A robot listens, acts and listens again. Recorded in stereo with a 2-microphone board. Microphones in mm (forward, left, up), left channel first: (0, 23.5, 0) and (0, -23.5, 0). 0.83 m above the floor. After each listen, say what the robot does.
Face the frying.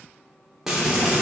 Turn 30° right.
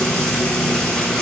Turn 20° left.
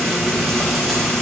Facing the frying.